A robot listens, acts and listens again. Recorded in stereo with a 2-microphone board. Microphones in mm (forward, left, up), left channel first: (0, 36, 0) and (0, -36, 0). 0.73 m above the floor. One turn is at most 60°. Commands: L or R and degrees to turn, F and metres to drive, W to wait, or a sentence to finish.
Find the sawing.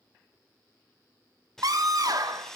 L30
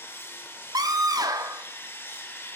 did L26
L60
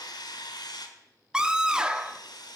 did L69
L60
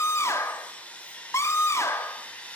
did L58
L20
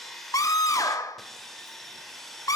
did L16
Found it: sawing, straight ahead, 1 to 2 m away.